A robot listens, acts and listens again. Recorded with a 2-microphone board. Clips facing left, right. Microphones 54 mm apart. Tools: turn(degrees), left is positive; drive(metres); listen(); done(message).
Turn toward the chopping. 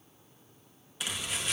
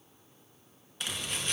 turn(degrees=30)
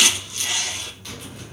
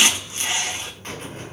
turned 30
turn(degrees=-35)
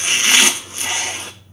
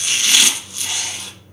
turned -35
turn(degrees=30)
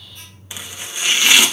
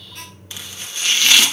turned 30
turn(degrees=15)
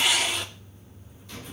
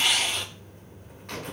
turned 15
done("Found it: chopping, straight ahead.")